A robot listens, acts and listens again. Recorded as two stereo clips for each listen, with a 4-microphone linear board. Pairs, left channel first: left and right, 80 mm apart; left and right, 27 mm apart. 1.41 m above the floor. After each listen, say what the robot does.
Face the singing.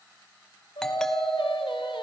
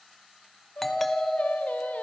Turn 90° left.
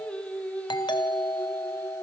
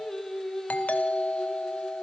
Turn 20° left.
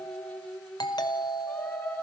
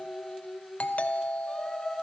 Turn 20° left.
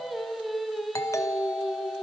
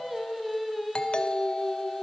Facing the singing.